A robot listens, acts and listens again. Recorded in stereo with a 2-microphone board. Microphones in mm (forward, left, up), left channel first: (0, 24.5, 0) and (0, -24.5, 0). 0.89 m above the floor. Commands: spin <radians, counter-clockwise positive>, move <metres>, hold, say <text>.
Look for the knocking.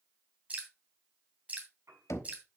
spin 1.57
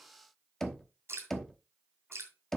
spin 0.17
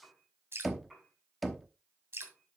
say Facing the knocking, 1 to 2 m away.